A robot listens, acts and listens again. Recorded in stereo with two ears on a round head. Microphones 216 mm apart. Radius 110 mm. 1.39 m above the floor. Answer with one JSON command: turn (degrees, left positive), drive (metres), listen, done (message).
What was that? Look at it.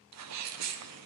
{"turn": -70}
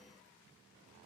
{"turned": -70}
{"listen": true}
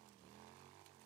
{"done": "I heard a sneeze, but can't make it out now. It was about straight ahead or 40° right."}